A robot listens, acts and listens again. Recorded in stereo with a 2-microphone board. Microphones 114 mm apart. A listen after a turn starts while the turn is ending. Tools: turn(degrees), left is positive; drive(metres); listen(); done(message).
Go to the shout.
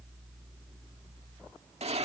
listen()
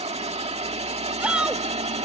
turn(degrees=-30)
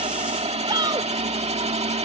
turn(degrees=-140)
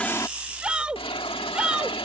turn(degrees=-10)
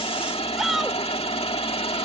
drive(metres=1.0)
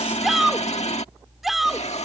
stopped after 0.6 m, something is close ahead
done("Blocked. The shout is further on, straight ahead.")